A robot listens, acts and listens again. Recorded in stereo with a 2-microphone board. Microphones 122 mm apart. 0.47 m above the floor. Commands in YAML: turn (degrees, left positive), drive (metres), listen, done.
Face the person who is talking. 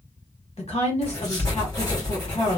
turn: 60
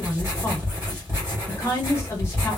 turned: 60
turn: 25
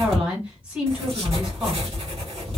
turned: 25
turn: -10
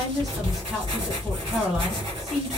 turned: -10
done: "Facing the woman speaking, 1 to 2 m away."